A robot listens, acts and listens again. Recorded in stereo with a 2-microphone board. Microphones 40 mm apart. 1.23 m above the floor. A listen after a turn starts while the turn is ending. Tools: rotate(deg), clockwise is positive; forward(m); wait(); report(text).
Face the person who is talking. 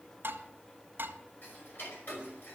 wait()
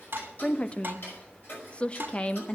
rotate(-25)
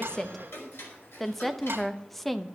report("Found it: a woman speaking, straight ahead, under 1 m away.")